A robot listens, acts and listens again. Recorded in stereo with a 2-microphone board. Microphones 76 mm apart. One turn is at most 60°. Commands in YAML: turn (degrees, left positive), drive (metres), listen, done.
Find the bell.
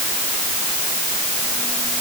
listen: true
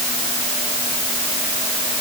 listen: true
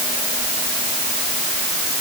done: "I can't make out a bell to turn to."